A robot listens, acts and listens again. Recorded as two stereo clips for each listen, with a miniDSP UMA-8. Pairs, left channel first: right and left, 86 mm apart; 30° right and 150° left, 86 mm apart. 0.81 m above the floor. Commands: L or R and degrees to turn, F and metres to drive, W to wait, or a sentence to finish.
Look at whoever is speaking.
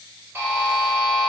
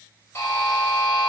W
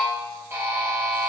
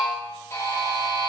W
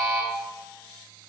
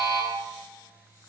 I can't make out anyone speaking, only a buzzer.